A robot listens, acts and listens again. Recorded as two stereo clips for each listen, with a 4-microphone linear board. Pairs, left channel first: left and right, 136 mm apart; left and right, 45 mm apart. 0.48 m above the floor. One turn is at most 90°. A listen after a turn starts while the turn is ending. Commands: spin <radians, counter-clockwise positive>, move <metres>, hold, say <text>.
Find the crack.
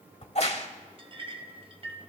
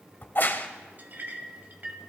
spin 0.87
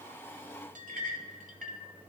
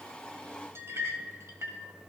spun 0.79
hold
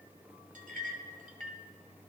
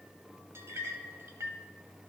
say I heard a crack, but can't make it out now. It was about 5° left or 85° left.